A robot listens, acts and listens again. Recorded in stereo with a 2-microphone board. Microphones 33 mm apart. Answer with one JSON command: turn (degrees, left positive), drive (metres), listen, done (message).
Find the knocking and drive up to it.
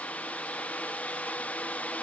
{"listen": true}
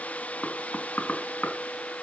{"turn": 60}
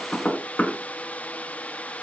{"turn": 55}
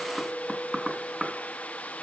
{"drive": 1.0}
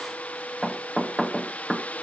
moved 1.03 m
{"drive": 1.0}
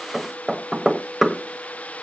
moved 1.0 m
{"drive": 1.0}
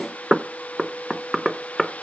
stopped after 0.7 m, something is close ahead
{"done": "I am next to the knocking."}